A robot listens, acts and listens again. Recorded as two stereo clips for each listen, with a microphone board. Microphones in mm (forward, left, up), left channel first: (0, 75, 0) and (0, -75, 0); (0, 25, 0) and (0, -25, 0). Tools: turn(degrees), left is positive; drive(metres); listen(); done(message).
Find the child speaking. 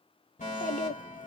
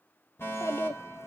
turn(degrees=65)
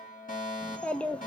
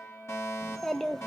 turn(degrees=10)
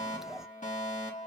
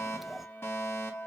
done("Facing the child speaking.")